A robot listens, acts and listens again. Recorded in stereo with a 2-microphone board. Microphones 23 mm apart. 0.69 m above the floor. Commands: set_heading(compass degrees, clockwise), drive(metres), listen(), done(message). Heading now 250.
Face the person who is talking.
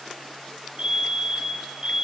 listen()
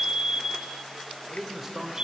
set_heading(280)
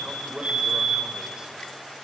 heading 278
set_heading(53)
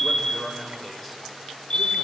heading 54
done("Found it: a man speaking, straight ahead.")